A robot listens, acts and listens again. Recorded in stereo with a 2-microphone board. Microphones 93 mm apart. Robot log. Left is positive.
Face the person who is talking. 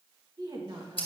note: The woman speaking: about 45° right or 135° right.
cmd yaw -45
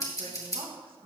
note: So it is at 85° right.
cmd yaw -85
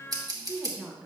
end: Found it: a woman speaking, straight ahead.